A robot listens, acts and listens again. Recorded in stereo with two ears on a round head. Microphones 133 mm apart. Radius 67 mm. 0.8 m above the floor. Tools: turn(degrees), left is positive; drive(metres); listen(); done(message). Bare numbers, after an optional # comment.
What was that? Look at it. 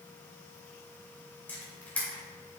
turn(30)
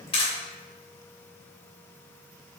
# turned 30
# So it is at 140° left.
turn(140)
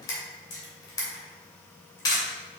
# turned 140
# The camera shutter is now 25° left.
turn(25)
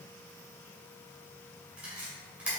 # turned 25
# The camera shutter is now 10° right.
turn(-10)
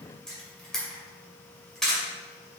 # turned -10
done("Found it: a camera shutter, straight ahead, 2 to 4 m away.")